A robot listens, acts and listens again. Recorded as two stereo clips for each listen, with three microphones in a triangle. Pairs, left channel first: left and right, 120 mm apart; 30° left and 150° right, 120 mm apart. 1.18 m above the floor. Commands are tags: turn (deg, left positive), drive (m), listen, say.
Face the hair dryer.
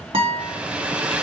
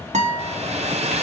<turn deg="-170"/>
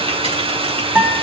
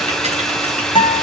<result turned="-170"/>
<turn deg="-55"/>
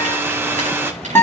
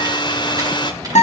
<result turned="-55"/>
<turn deg="-20"/>
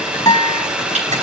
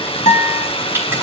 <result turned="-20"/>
<turn deg="-10"/>
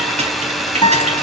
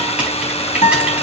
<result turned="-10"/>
<say>Facing the hair dryer.</say>